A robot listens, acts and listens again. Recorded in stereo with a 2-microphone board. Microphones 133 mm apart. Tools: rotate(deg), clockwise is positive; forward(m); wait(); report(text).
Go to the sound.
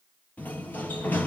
rotate(-30)
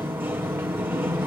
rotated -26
rotate(15)
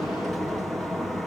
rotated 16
forward(1.0)
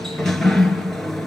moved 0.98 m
forward(1.0)
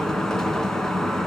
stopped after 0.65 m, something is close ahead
report("I am next to the sliding door.")